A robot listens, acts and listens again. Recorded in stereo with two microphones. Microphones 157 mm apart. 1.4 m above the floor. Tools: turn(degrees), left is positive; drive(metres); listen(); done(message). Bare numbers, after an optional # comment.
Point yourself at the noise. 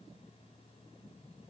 listen()
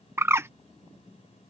turn(-30)
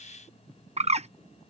# So it is at 135° right.
turn(-135)
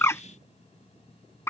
# The bird is now 15° left.
turn(15)
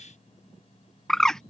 done("Found it: a bird, straight ahead.")